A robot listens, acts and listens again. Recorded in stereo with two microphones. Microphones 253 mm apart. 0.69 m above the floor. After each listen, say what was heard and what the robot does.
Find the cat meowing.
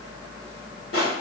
Keep listening.
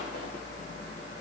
Keep listening.
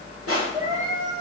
The cat meowing: about 20° right or 160° right. Turn 20° right.
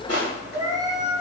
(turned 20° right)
The cat meowing: about 20° right or 160° right. Turn 20° right.
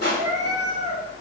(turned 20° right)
The cat meowing: about 20° right or 160° right. Turn 20° right.
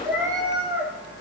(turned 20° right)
The cat meowing: about 20° right or 160° right. Turn 20° right.
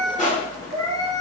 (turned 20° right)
Facing the cat meowing.